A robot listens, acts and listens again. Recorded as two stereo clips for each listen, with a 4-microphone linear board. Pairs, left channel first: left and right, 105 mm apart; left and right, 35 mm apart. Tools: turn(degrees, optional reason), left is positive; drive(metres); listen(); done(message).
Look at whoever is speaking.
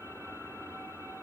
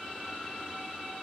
listen()
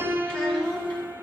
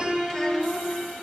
turn(degrees=30)
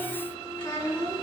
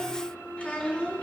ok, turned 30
turn(degrees=145, reason="So it is at 145° left.")
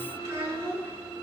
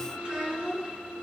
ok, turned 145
turn(degrees=-30, reason="The child speaking is now 30° right.")
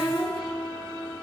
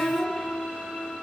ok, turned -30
listen()
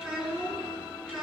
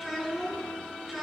done("Facing the child speaking.")